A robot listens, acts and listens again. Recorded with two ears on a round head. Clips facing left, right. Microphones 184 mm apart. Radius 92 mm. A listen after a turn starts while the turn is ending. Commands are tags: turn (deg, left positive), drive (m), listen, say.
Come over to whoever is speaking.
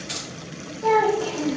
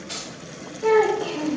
<turn deg="-20"/>
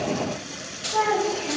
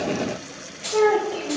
<turn deg="-135"/>
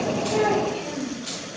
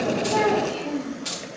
<turn deg="-15"/>
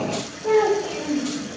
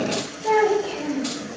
<drive m="1.0"/>
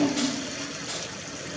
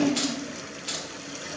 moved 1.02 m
<drive m="1.0"/>
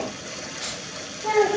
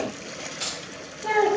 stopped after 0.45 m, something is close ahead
<turn deg="-10"/>
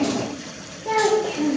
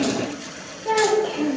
<say>I am next to the child speaking.</say>